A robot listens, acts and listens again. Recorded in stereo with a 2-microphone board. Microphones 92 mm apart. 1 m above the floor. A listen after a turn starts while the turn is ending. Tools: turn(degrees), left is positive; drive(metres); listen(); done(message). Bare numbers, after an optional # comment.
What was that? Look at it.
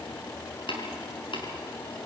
# The tapping: about 60° left or 120° left.
turn(60)
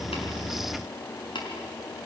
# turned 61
# So it is at 60° left.
turn(60)
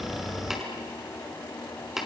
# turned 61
done("Found it: tapping, straight ahead.")